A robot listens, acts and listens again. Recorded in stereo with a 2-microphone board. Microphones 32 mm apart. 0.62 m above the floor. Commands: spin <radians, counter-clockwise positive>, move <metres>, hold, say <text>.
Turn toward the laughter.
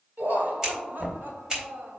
spin -1.22
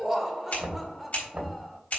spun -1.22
say Facing the laughter, 1 to 2 m away.